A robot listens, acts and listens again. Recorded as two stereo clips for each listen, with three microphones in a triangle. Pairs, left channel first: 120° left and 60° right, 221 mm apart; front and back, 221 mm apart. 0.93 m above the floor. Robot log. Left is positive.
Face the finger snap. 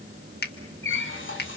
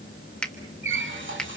note: The finger snap: 85° left.
cmd yaw +85
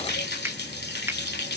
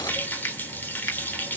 note: The finger snap is now 20° left.
cmd yaw +20
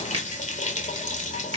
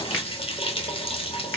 cmd idle
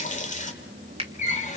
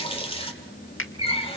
end: Facing the finger snap.